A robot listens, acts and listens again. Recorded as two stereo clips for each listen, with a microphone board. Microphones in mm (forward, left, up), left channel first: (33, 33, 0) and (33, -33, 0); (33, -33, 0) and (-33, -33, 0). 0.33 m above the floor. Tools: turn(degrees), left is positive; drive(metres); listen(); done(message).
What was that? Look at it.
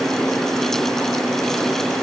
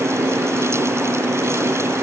listen()
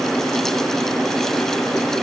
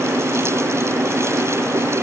listen()
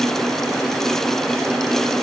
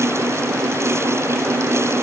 done("I can't make out anything to turn to.")